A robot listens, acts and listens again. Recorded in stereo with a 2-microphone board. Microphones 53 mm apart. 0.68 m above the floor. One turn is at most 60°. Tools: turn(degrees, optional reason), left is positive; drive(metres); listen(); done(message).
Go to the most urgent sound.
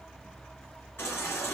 turn(degrees=45, reason="The baby crying: about 45° left or 135° left.")
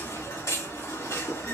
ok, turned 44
turn(degrees=60, reason="So it is at 90° left.")
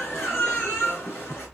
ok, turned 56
turn(degrees=30, reason="The baby crying is now 30° left.")
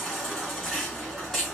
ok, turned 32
drive(metres=1.0)
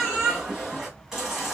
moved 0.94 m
turn(degrees=-10, reason="The baby crying is now 10° right.")
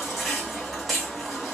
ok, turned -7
drive(metres=1.0)
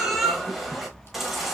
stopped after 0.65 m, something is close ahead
done("I am next to the baby crying.")